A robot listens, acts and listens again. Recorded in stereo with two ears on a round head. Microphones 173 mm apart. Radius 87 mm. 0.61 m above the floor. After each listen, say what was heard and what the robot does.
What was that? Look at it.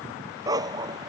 The dog barking: about 20° right or 160° right. Turn 20° right.
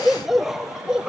Turn 30° right.
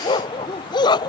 So it is at 20° left. Turn 20° left.
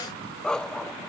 Found it: a dog barking, straight ahead.